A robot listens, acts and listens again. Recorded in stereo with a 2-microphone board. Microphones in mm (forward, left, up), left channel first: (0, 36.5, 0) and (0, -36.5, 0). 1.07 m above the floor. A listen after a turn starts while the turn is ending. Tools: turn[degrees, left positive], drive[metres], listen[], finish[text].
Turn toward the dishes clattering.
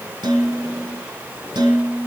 Action: turn[-90]
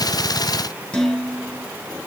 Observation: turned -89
Thought: So it is at 10° left.
Action: turn[10]
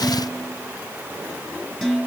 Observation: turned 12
Action: finish[Facing the dishes clattering.]